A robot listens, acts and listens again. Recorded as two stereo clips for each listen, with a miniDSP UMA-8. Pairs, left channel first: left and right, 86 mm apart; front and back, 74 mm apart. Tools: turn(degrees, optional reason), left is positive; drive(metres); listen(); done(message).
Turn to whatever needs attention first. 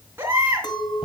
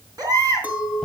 turn(degrees=-155, reason="The baby crying: 155° right.")
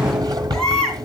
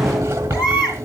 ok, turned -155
done("Facing the baby crying.")